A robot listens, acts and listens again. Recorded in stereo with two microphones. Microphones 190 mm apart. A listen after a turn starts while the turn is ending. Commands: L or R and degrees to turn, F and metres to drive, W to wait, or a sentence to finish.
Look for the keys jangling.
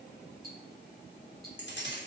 L70
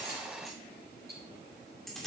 Found it: keys jangling, straight ahead.